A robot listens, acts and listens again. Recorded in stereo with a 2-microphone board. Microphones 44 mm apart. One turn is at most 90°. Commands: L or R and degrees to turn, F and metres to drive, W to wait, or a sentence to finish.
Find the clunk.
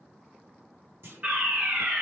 R65
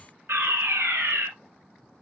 W
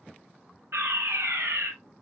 I heard a clunk, but can't make it out now. It was about straight ahead or 50° right.